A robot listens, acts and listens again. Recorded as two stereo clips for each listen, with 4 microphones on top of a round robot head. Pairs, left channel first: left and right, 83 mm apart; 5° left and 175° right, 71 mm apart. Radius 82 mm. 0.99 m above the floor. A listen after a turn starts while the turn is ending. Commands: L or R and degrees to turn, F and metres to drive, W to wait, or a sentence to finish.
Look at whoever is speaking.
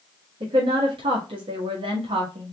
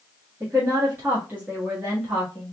R95
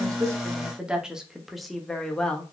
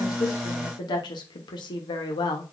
L10
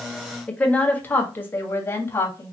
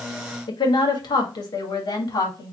L30
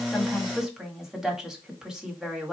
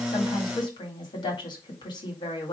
Found it: a woman speaking, straight ahead, 1 to 2 m away.